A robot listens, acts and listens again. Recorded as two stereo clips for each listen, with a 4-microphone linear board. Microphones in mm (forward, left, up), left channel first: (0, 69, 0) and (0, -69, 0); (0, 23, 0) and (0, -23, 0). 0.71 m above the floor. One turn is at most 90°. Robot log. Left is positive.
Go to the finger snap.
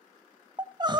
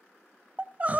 cmd idle
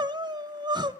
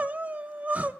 cmd idle
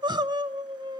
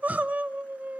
end: I can't make out a finger snap, only crying.